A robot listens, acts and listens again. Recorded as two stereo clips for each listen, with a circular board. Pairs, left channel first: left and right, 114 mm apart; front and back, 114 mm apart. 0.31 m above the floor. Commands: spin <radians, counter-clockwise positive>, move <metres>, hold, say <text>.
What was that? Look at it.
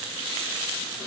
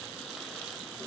hold
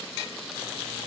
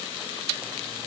hold
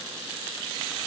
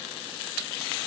say I can't make out anything to turn to.